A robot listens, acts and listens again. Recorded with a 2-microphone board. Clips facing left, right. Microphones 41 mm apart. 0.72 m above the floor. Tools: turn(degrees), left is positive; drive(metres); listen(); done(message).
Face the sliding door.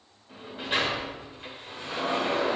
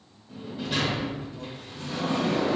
turn(degrees=30)
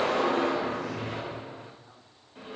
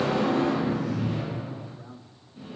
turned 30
turn(degrees=115)
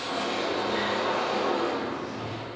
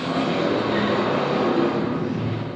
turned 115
turn(degrees=-25)
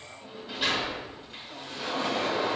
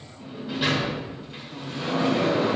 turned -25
done("Facing the sliding door.")